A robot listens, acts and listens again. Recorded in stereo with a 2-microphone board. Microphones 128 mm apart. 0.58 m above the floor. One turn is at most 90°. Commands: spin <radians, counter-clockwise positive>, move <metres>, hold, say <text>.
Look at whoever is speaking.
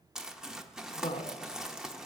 spin 1.05
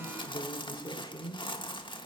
spin 0.79
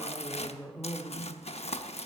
say Facing the woman speaking, 1 to 2 m away.